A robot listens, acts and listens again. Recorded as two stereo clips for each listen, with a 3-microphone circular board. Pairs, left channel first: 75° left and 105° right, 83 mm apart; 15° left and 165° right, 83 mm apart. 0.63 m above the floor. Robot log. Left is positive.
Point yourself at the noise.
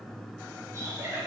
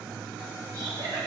note: The laughter: 160° right.
cmd yaw -160
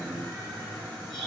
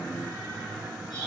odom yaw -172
note: Nothing new. It was at 15° left.
cmd yaw +15
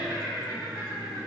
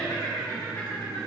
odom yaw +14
note: The laughter is now 40° right.
cmd yaw -40
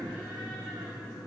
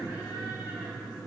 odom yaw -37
cmd idle
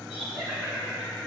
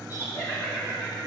note: The laughter is now 15° right.
cmd yaw -15
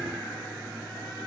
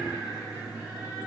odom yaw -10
cmd idle
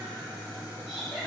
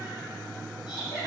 end: Facing the laughter, 2 to 4 m away.